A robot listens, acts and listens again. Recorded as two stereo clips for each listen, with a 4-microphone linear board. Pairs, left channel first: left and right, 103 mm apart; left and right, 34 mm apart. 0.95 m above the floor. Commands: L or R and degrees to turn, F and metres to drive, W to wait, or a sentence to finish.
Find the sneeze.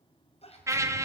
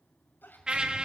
L90
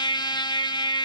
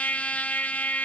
Facing where the sneeze came from. I can't hear it now.